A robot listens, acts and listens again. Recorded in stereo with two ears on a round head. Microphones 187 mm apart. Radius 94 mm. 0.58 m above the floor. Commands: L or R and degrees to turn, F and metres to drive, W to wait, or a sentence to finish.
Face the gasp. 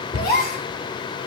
L50
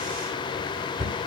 W
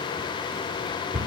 I heard a gasp, but can't make it out now. It was about straight ahead or 80° left.